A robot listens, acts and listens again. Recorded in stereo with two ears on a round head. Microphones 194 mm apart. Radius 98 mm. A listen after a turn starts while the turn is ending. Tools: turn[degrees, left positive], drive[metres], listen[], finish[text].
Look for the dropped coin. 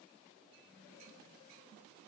Action: listen[]
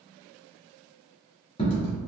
Thought: The dropped coin: about 30° left or 150° left.
Action: turn[30]
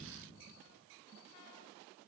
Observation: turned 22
Action: listen[]
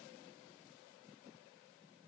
Action: finish[I heard a dropped coin, but can't make it out now. It was about 5° left or 130° left.]